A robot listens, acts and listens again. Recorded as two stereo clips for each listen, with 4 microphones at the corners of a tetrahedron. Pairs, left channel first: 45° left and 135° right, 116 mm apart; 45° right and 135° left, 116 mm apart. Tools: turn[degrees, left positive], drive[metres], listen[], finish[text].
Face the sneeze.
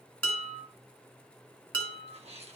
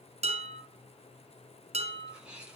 Thought: The sneeze: 145° right.
Action: turn[-145]
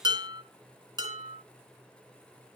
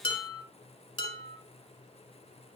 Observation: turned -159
Thought: Nothing new. It was at 15° left.
Action: turn[15]
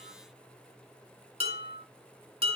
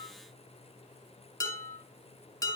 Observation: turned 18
Action: finish[Facing where the sneeze came from. I can't hear it now.]